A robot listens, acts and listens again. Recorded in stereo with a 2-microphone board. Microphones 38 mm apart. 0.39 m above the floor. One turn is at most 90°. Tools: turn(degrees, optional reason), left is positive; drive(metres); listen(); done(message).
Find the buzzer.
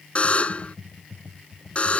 turn(degrees=35, reason="The buzzer: about 35° left or 145° left.")
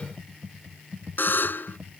turn(degrees=90, reason="So it is at 105° left.")
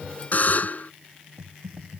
turn(degrees=50, reason="The buzzer is now 50° left.")
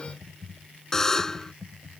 turn(degrees=15, reason="The buzzer is now 15° left.")
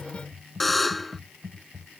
done("Facing the buzzer.")